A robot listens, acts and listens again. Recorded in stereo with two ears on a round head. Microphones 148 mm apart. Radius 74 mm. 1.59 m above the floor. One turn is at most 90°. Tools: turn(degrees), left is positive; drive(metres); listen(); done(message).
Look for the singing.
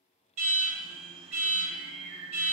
turn(degrees=-55)
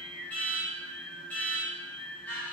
done("Found it: singing, straight ahead, 1 to 2 m away.")